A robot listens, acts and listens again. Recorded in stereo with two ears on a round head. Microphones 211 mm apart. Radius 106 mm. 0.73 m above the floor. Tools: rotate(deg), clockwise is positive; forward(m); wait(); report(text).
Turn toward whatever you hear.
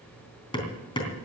rotate(-20)
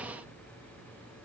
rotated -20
wait()
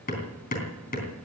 rotate(-140)
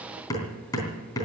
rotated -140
rotate(-15)
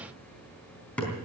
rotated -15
report("Facing the hammering, 2 to 4 m away.")